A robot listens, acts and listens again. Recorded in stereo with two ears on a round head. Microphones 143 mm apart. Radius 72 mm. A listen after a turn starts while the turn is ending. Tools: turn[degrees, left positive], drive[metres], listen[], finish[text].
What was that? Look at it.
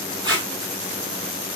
Thought: The tape being pulled: about 30° right or 150° right.
Action: turn[-30]
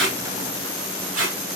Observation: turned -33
Thought: So it is at 105° right.
Action: turn[-105]
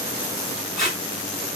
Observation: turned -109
Action: finish[Facing the tape being pulled.]